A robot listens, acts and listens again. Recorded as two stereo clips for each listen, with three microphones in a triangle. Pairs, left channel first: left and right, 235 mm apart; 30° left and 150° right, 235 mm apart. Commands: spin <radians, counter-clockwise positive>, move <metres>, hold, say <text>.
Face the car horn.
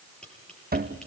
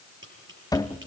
hold
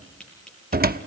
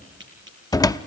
hold
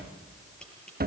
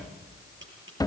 say I can't make out a car horn, only a cupboard door and tapping.